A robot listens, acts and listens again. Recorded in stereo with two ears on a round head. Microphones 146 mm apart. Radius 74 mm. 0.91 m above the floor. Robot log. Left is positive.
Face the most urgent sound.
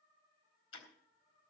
cmd idle
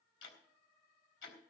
cmd idle
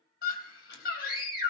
note: The scream: about 65° left or 115° left.
cmd yaw +65
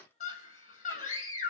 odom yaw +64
note: So it is at 45° left.
cmd yaw +45
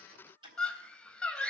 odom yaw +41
end: Facing the scream, over 4 m away.